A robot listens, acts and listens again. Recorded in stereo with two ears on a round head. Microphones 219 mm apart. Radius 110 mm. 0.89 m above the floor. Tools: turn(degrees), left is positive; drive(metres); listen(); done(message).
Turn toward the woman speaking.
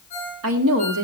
turn(degrees=-60)
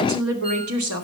turn(degrees=-70)
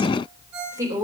turn(degrees=-15)
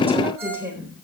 turn(degrees=-10)
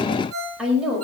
done("Found it: a woman speaking, straight ahead.")